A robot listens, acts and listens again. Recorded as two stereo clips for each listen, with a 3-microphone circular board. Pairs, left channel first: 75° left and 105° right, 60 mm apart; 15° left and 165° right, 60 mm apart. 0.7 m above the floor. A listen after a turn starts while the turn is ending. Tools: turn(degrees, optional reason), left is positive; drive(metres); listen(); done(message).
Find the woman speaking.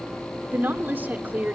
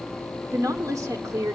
turn(degrees=-165, reason="The woman speaking: 165° right.")
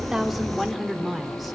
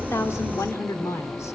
turn(degrees=-15, reason="The woman speaking is now 15° right.")
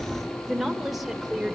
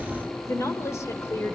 turn(degrees=-20, reason="The woman speaking is now 20° right.")
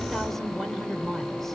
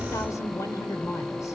turn(degrees=-10, reason="The woman speaking is now 10° right.")
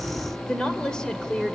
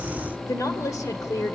done("Found it: a woman speaking, straight ahead, 2 to 4 m away.")